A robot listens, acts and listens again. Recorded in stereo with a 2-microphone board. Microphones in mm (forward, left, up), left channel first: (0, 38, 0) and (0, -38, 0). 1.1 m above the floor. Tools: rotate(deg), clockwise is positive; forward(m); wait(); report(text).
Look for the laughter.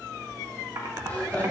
rotate(-20)
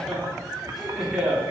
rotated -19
report("Found it: laughter, straight ahead.")